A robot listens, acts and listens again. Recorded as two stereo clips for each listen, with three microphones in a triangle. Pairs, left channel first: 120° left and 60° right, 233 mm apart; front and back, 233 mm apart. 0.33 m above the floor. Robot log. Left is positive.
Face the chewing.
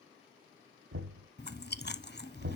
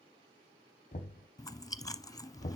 note: The chewing: 75° left.
cmd yaw +75
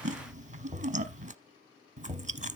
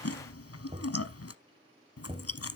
end: Found it: chewing, straight ahead.